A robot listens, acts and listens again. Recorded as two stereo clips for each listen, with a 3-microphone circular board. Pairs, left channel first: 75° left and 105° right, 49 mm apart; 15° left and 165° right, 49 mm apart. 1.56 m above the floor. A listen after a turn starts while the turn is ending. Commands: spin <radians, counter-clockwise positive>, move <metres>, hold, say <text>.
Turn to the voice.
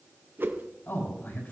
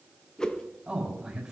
spin 2.09
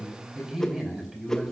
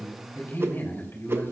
spin -0.44
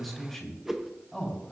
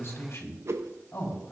spin -0.17
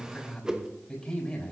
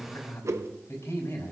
say Facing the man speaking.